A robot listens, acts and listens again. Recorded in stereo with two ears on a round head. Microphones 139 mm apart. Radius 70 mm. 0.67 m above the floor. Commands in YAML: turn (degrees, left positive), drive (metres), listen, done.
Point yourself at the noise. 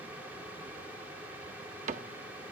turn: -50
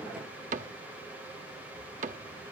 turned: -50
turn: -65
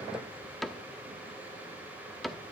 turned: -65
done: "Facing the cupboard door."